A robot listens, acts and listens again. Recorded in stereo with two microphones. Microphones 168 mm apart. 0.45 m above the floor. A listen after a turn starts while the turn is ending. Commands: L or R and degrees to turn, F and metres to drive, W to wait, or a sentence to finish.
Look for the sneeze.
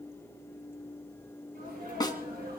R75
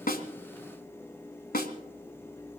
W
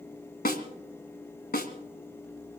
I heard a sneeze, but can't make it out now. It was about straight ahead or 30° right.